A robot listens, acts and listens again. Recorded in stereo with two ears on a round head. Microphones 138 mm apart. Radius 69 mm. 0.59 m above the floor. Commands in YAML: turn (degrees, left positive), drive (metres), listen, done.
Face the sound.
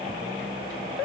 listen: true
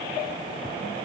listen: true
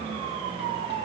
done: "I can't make out anything."